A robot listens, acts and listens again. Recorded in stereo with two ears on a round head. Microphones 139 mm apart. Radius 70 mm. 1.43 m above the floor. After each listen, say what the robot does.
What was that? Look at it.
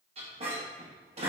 Turn 40° right.
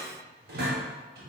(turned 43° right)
Turn 95° right.
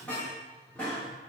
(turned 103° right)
Turn 10° left.
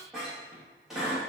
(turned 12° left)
Found it: a squeak, straight ahead, 1 to 2 m away.